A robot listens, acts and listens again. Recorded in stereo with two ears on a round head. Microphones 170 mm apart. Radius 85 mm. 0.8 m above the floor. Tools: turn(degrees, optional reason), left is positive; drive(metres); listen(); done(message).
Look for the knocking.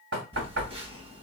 turn(degrees=-65, reason="The knocking: about 65° right or 115° right.")
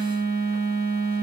listen()
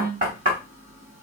turn(degrees=-45, reason="So it is at 45° right.")
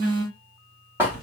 turn(degrees=-10, reason="The knocking is now 10° right.")
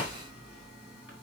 listen()
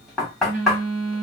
done("Found it: knocking, straight ahead, 2 to 4 m away.")